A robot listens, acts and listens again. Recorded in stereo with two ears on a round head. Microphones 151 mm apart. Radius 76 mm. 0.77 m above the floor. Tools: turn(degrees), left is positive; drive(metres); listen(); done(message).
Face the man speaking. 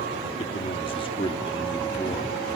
turn(degrees=20)
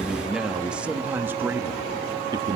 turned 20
turn(degrees=-25)
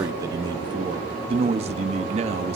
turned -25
turn(degrees=-40)
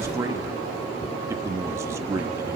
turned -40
turn(degrees=-15)
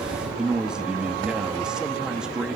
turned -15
done("Facing the man speaking, 1 to 2 m away.")